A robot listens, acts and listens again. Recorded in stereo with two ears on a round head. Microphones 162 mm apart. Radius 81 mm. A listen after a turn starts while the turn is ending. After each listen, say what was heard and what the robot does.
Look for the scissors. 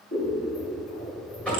The scissors: about 50° left or 130° left. Turn 50° left.
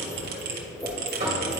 So it is at 10° left. Turn 10° left.
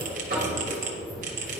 Found it: scissors, straight ahead.